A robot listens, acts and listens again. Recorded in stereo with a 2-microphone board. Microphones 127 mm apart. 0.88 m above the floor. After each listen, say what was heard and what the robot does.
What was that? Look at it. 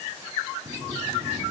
The sliding door: about 50° right or 130° right. Turn 50° right.
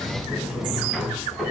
Found it: a sliding door, straight ahead.